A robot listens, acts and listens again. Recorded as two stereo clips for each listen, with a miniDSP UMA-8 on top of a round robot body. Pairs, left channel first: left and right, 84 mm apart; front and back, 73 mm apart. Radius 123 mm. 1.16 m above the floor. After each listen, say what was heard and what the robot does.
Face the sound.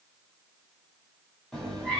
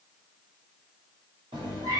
The cat meowing: 170° left. Turn 170° left.
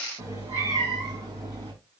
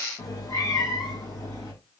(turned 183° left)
The cat meowing is now 45° right. Turn 45° right.
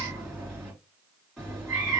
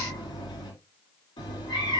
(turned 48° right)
Facing the cat meowing.